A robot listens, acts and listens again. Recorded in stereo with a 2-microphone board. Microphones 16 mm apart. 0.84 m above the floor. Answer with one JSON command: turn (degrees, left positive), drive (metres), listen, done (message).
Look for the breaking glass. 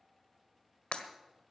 {"turn": 90}
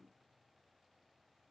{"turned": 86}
{"done": "Facing where the breaking glass came from. I can't hear it now."}